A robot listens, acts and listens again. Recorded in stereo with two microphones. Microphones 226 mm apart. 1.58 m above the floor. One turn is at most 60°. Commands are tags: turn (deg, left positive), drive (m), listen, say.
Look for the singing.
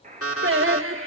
<turn deg="-60"/>
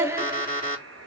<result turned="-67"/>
<turn deg="-10"/>
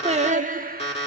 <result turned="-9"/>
<turn deg="-40"/>
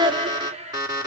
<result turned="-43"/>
<turn deg="-20"/>
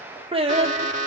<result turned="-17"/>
<turn deg="-25"/>
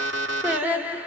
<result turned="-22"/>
<say>Found it: singing, straight ahead, 1 to 2 m away.</say>